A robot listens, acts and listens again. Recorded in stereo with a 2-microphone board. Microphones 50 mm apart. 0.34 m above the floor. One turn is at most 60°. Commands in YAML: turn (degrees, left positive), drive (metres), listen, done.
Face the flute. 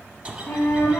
turn: 55
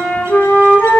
turn: 55
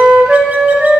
turn: -10
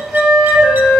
done: "Found it: a flute, straight ahead, 1 to 2 m away."